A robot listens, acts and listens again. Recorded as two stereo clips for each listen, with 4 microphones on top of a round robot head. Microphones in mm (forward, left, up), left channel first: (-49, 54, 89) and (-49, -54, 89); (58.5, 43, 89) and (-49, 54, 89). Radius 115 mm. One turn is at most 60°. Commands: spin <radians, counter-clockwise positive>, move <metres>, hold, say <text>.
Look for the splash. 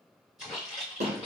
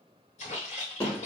say Found it: a splash, straight ahead, 2 to 4 m away.